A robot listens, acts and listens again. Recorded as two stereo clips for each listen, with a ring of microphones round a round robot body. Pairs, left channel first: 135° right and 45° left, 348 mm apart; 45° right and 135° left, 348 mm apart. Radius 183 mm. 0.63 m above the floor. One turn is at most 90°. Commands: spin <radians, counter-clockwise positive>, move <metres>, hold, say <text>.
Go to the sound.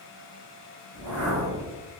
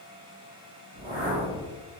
spin 1.31
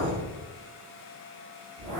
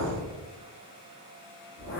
move 1.0
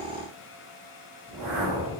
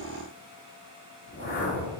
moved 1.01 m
spin 0.35
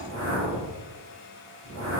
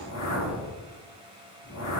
move 1.0
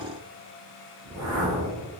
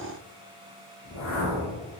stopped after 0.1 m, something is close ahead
say Arrived at the whoosh, straight ahead.